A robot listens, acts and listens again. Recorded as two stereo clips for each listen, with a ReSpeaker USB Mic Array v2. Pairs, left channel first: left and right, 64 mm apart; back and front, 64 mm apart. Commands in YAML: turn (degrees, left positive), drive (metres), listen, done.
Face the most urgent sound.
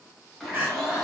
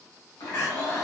turn: -140
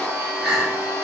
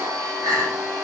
turn: 10
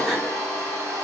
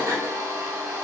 listen: true
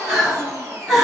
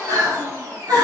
done: "Facing the crying, 1 to 2 m away."